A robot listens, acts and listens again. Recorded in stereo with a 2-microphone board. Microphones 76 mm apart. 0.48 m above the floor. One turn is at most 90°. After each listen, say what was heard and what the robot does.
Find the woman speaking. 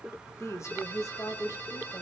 The woman speaking: about 55° left or 125° left. Turn 55° left.
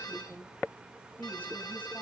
So it is at 25° left. Turn 25° left.
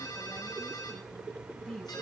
Found it: a woman speaking, straight ahead, over 4 m away.